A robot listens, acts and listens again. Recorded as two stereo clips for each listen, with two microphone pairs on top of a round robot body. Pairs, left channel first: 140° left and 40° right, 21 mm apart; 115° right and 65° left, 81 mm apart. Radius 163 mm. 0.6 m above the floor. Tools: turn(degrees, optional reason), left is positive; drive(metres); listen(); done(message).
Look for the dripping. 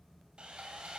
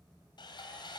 listen()
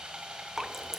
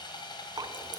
turn(degrees=25, reason="The dripping: 25° left.")
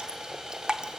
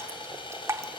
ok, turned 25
turn(degrees=10, reason="The dripping is now 10° left.")
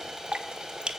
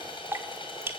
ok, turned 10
done("Found it: dripping, straight ahead, under 1 m away.")